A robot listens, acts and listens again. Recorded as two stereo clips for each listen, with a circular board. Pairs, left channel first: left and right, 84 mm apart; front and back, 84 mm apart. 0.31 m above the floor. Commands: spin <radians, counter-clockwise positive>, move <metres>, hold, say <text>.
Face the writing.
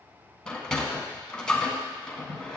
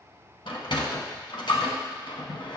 hold
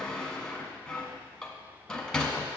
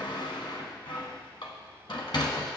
hold
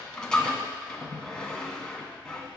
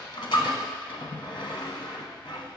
say I can't make out writing to turn to.